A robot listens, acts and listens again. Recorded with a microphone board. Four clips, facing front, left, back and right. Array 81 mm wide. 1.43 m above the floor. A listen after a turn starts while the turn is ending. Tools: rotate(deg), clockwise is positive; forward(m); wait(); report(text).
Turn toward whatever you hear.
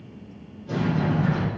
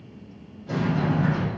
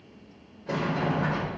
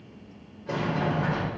rotate(135)
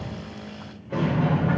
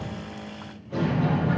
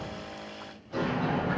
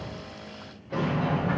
rotate(20)
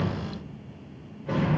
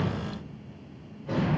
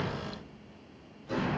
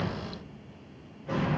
report("Found it: a sliding door, straight ahead, over 4 m away.")